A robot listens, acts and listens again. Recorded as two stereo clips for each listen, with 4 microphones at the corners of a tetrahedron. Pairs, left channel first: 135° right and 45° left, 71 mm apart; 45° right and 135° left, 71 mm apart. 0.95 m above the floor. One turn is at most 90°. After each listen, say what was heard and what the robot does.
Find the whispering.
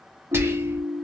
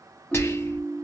Found it: whispering, straight ahead.